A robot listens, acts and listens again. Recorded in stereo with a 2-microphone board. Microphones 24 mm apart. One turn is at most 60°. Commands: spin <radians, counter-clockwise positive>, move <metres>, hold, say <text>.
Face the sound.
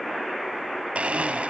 spin -1.05
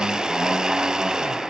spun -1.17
spin -0.70
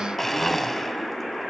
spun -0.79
say Facing the blender, 1 to 2 m away.